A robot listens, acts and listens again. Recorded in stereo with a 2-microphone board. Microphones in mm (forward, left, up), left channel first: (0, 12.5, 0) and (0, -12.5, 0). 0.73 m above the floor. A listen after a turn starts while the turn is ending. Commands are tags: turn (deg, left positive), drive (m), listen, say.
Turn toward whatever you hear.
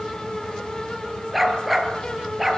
<turn deg="-30"/>
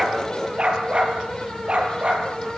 <turn deg="-140"/>
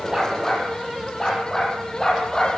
<turn deg="10"/>
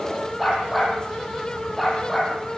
<say>Found it: a dog barking, straight ahead, over 4 m away.</say>